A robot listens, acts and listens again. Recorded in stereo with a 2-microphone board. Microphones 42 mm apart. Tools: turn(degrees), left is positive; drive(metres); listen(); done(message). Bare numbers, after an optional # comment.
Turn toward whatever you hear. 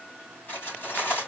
# The cutlery clinking: about 50° left or 130° left.
turn(50)
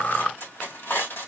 # So it is at 75° left.
turn(75)
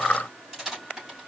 # The cutlery clinking is now 10° right.
turn(-10)
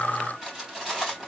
done("Facing the cutlery clinking, 2 to 4 m away.")